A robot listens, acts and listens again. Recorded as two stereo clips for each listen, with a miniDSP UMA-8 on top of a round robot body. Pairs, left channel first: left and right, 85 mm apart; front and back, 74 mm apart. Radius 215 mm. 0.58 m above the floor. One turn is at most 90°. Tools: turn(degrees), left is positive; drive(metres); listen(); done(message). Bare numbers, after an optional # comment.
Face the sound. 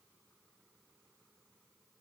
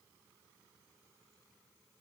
listen()
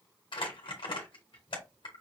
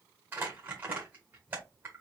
# The crumpling: 115° left.
turn(90)
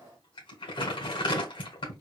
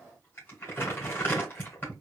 # The crumpling is now 65° left.
turn(65)
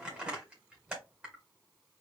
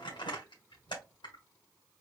done("Facing the crumpling, 1 to 2 m away.")